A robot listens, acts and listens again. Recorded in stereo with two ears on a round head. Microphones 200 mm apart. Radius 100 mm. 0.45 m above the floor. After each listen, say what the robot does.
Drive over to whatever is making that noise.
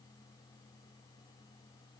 Keep listening.
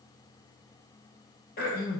Turn 40° left.
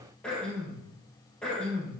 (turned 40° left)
Drive 1.0 m forward.
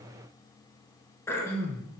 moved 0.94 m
Turn 10° left.
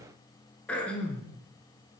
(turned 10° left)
Drive 1.0 m forward.
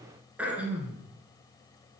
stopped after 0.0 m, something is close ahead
Arrived at the throat clearing, straight ahead.